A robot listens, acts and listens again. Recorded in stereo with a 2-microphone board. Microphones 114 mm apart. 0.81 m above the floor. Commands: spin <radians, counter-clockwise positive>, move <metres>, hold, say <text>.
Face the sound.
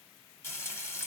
spin 0.35
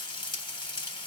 spin 2.44
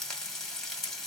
say Facing the frying.